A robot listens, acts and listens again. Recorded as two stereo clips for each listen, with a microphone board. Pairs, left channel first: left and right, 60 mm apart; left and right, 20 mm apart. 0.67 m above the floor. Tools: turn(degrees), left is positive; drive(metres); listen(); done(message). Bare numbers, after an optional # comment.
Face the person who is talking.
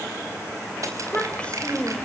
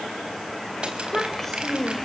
# The child speaking: about 20° left or 160° left.
turn(20)
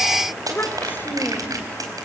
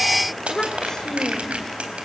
# So it is at 140° left.
turn(140)
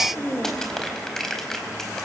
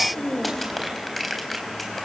# The child speaking is now 40° left.
turn(40)
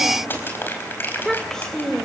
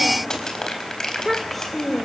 # The child speaking is now 10° left.
turn(10)
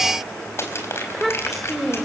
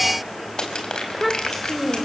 done("Facing the child speaking.")